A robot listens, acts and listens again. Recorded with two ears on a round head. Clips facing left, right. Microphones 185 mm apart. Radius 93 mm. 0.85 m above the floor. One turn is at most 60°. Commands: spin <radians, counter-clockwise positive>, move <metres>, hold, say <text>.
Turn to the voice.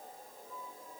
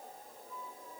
hold
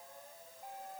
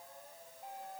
hold
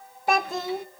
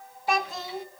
spin 0.79
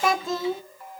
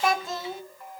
spin 1.05
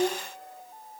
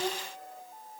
spin 0.26
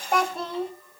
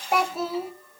say Facing the child speaking, 1 to 2 m away.